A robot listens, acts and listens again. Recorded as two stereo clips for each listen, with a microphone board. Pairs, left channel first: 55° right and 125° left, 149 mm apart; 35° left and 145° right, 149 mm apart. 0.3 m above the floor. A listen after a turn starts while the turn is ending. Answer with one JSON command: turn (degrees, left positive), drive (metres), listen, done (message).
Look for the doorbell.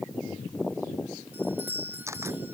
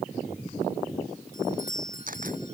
{"turn": 50}
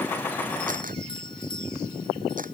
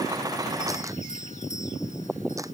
{"done": "Found it: a doorbell, straight ahead."}